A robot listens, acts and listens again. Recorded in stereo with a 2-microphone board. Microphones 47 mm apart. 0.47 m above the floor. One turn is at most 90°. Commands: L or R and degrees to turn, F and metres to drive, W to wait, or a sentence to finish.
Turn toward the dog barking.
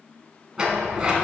W
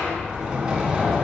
W
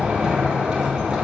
I can't make out a dog barking, only a sliding door.